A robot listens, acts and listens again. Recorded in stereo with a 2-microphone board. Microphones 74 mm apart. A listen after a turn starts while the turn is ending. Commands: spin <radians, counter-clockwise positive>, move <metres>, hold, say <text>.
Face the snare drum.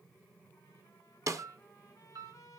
spin -0.87
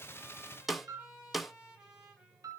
say Facing the snare drum, 1 to 2 m away.